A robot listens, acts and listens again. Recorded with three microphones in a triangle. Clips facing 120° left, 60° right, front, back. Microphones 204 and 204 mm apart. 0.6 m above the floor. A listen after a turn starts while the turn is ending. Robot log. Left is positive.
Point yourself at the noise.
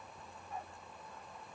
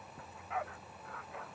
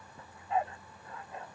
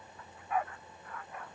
note: The dog barking: 65° right.
cmd yaw -65
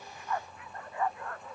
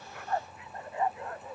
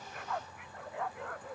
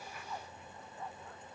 note: The dog barking is now 10° left.
cmd yaw +10
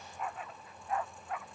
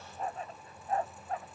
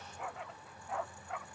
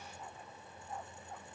end: Facing the dog barking.